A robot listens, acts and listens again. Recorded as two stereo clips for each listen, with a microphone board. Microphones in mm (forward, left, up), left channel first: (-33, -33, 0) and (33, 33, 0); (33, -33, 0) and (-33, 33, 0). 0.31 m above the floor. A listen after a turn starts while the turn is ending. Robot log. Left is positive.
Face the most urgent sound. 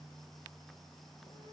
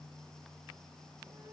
cmd idle
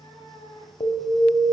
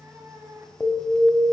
note: The alarm: 125° right.
cmd yaw -125
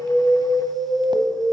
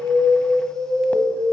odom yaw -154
note: The alarm is now 25° left.
cmd yaw +25
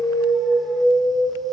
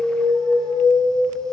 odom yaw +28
end: Found it: an alarm, straight ahead.